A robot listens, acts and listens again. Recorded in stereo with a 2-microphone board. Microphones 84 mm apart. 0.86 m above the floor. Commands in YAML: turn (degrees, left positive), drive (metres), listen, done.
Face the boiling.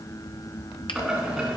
turn: -30
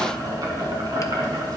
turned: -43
turn: -130
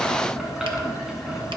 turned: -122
turn: -10
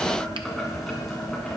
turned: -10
done: "Facing the boiling, 2 to 4 m away."